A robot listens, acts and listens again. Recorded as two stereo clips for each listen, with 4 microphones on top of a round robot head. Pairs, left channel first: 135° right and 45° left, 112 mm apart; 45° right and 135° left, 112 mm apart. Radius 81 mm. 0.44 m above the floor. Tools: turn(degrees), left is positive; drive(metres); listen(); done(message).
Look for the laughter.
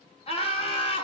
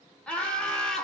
turn(degrees=-130)
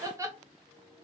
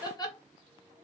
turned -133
turn(degrees=-10)
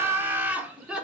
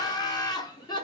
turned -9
turn(degrees=-30)
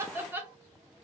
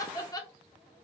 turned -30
turn(degrees=-15)
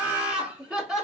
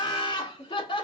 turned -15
turn(degrees=-35)
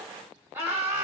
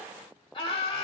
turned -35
turn(degrees=-15)
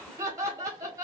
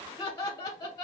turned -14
done("Facing the laughter, 1 to 2 m away.")